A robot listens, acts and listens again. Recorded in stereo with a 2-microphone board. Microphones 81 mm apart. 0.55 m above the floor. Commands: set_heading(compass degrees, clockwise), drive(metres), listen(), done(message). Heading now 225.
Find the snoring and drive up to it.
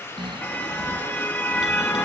set_heading(300)
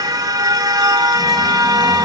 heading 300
listen()
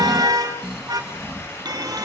drive(1.0)
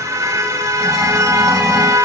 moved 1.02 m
listen()
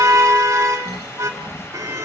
drive(1.0)
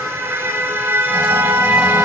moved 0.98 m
listen()
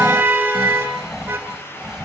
drive(1.0)
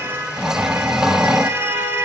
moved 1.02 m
drive(1.0)
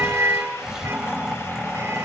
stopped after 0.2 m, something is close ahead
done("Arrived at the snoring, straight ahead.")